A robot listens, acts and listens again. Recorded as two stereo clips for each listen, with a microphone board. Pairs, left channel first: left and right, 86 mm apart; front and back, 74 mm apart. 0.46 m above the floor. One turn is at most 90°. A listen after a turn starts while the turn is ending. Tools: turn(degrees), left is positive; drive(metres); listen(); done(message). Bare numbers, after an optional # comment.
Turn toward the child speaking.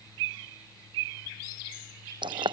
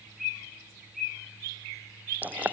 listen()
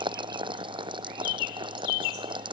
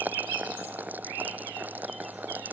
listen()
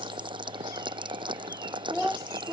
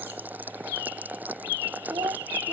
# The child speaking: 175° left.
turn(90)
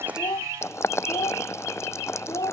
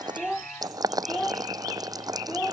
# The child speaking is now 75° left.
turn(75)
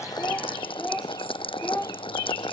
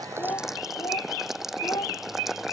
# The child speaking is now 20° left.
turn(20)
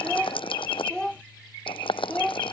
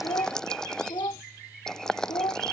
# The child speaking is now 10° left.
turn(10)
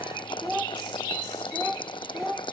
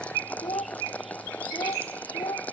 done("Facing the child speaking.")